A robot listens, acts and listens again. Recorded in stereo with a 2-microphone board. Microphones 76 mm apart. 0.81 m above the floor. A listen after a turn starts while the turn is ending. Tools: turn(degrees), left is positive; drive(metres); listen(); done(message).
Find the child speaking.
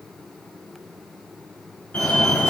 listen()
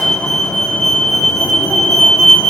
listen()
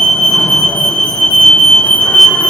done("I can't make out a child speaking, only a fire alarm.")